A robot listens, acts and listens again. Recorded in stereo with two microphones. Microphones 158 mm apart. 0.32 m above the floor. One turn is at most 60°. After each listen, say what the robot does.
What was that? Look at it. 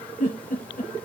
Turn 60° left.
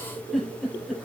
Found it: a giggle, straight ahead.